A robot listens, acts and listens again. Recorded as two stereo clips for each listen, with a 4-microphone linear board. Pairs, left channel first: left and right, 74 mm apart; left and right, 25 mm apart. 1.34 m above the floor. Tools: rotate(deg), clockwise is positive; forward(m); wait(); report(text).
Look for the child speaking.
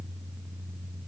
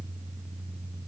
wait()
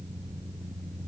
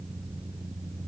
wait()
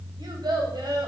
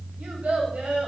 rotate(70)
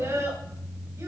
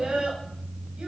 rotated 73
rotate(40)
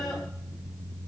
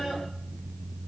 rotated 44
wait()
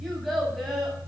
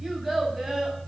report("Found it: a child speaking, straight ahead, over 4 m away.")